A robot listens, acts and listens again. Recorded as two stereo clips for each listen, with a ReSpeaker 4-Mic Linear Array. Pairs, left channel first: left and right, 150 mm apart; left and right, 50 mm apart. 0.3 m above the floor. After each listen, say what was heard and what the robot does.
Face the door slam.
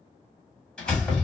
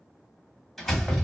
Turn 30° left.
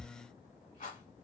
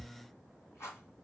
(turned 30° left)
Keep listening.
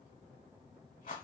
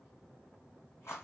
I heard a door slam, but can't make it out now. It was about 25° right or 145° left.